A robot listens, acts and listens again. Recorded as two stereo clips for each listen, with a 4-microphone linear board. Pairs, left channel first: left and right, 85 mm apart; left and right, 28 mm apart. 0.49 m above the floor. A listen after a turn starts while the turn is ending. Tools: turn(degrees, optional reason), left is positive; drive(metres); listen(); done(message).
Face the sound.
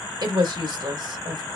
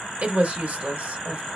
turn(degrees=-55, reason="The woman speaking: about 55° right or 125° right.")
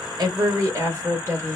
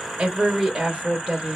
turn(degrees=-45, reason="So it is at 45° right.")
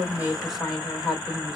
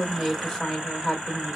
done("Facing the woman speaking, 1 to 2 m away.")